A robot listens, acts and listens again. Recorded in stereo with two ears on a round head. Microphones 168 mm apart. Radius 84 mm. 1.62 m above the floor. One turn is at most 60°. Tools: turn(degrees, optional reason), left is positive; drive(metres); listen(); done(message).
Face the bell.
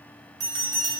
turn(degrees=-20, reason="The bell: about 20° right or 160° right.")
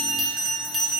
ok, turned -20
done("Found it: a bell, straight ahead.")